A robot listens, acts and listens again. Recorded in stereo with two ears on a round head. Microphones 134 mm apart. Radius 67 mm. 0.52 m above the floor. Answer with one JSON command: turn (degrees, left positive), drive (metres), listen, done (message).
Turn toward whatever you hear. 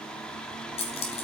{"turn": 45}
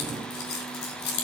{"turn": 80}
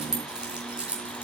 {"turn": -10}
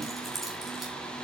{"done": "Facing the keys jangling, over 4 m away."}